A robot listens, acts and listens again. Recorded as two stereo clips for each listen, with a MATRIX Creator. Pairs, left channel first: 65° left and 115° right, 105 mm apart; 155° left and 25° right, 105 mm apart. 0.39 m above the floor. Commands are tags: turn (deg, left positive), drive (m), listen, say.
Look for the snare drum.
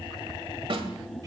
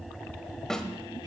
<turn deg="-120"/>
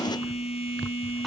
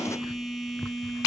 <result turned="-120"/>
<listen/>
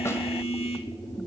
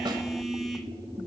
<listen/>
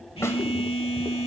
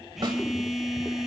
<say>Facing where the snare drum came from. I can't hear it now.</say>